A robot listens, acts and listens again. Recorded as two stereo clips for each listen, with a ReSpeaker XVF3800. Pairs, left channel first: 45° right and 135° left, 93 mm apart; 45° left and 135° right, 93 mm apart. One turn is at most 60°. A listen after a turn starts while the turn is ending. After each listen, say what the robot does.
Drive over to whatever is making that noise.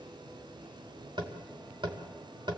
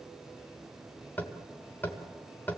Turn 60° left.
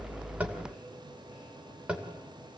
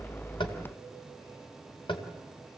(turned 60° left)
Turn 55° left.
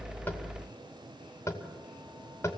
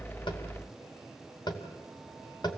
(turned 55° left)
Turn 10° left.
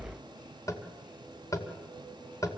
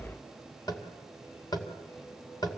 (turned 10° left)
Drive 1.0 m forward.
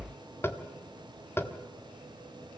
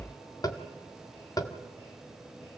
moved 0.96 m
Turn 15° left.
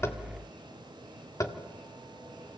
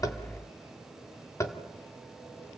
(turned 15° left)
Drive 1.0 m forward.
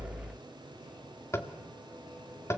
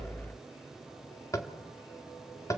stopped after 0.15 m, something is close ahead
Arrived at the tapping, straight ahead.